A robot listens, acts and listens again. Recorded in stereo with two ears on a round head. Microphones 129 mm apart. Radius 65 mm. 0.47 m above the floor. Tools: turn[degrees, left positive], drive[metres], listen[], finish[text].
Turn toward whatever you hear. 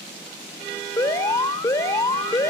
Thought: The alarm: about 20° left or 160° left.
Action: turn[20]
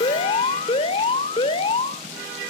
Thought: So it is at 135° left.
Action: turn[135]
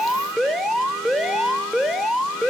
Action: finish[Found it: an alarm, straight ahead.]